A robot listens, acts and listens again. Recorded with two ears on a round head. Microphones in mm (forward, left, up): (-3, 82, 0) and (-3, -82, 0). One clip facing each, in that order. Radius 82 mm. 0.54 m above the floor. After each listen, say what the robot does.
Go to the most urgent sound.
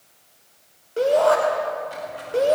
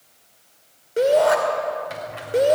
Turn 20° right.
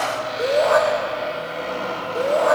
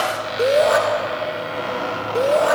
Turn 140° right.
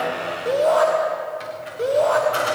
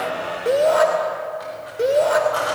Turn 30° right.
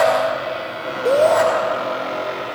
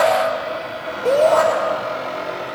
Drive 1.0 m forward.
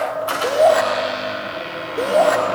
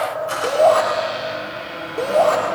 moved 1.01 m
Turn 15° left.
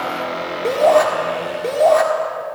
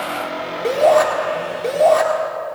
Drive 1.0 m forward.
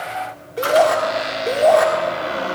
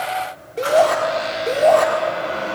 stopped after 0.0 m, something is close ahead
I am next to the shout.